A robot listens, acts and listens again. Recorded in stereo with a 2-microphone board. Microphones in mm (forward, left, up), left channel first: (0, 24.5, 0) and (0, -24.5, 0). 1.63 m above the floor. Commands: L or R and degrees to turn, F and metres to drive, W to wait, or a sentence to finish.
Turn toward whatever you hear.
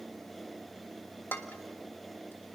L50
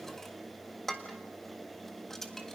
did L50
L10
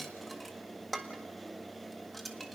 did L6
Facing the dishes clattering, 1 to 2 m away.